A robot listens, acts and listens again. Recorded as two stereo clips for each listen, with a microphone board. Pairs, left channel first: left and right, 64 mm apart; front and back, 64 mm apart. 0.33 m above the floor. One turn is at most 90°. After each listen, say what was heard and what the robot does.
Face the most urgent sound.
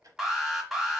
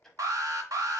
The alarm: 175° right. Turn 90° right.
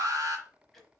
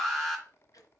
The alarm is now 90° right. Turn 90° right.
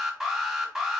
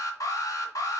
Facing the alarm.